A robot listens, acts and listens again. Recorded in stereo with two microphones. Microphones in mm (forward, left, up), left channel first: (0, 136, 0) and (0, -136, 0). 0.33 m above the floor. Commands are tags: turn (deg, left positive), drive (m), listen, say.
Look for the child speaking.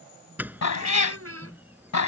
<turn deg="-60"/>
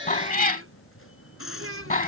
<turn deg="-55"/>
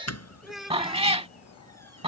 <say>Found it: a child speaking, straight ahead.</say>